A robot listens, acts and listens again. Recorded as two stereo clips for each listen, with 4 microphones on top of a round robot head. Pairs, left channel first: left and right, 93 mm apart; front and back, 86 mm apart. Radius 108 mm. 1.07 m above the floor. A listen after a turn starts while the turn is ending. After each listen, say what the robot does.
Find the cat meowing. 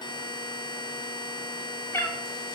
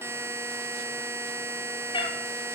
Turn 25° left.
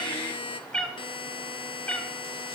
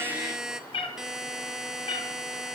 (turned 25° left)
Turn 15° left.
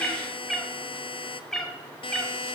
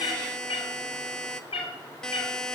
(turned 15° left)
Found it: a cat meowing, straight ahead, 2 to 4 m away.